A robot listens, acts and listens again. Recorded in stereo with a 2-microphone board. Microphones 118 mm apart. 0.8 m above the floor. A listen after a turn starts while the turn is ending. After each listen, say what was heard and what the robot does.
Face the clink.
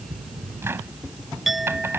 Turn 30° left.
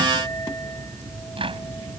Keep listening.
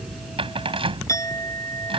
So it is at 150° left. Turn 150° left.
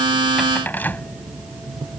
Keep listening.
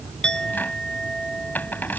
Facing the clink.